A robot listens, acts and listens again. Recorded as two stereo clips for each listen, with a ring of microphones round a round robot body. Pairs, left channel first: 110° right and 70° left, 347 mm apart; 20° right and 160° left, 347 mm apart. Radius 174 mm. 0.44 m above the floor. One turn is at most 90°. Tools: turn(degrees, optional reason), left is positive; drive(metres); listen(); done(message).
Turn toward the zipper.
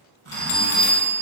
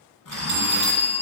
turn(degrees=15, reason="The zipper: 15° left.")
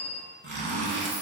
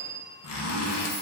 done("Found it: a zipper, straight ahead.")